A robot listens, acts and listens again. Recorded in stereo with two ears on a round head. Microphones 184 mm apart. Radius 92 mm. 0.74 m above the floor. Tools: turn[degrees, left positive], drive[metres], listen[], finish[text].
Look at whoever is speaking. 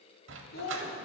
Thought: The child speaking: about 50° left or 130° left.
Action: turn[50]
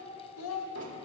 Thought: So it is at 80° left.
Action: turn[80]
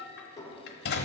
Action: listen[]
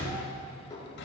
Action: listen[]
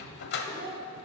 Thought: The child speaking is now 25° right.
Action: turn[-25]
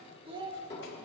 Thought: The child speaking is now 25° right.
Action: turn[-25]
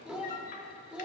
Action: finish[Facing the child speaking.]